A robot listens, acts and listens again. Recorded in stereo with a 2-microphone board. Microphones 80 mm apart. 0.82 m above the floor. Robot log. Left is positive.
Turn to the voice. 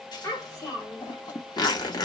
note: The child speaking: about 40° left or 140° left.
cmd yaw +40
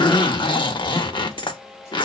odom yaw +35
cmd idle
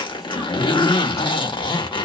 cmd idle
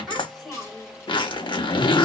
end: Found it: a child speaking, straight ahead.